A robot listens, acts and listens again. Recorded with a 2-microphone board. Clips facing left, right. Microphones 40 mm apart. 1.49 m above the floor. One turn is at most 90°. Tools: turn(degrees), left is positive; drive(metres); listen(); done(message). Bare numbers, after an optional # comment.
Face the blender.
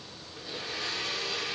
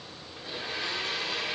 # The blender: about 25° right or 155° right.
turn(-25)
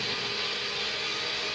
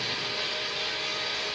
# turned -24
done("Facing the blender.")